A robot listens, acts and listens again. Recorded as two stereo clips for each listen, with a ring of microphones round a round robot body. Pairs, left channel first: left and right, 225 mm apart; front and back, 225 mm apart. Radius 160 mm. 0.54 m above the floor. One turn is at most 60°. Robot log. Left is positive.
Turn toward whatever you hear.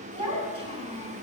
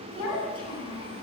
note: The child speaking: 25° right.
cmd yaw -25
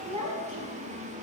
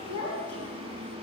note: The child speaking is now 30° right.
cmd yaw -30
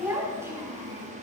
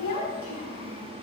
note: The child speaking is now 15° right.
cmd yaw -15
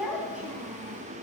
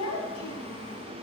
end: Found it: a child speaking, straight ahead, 2 to 4 m away.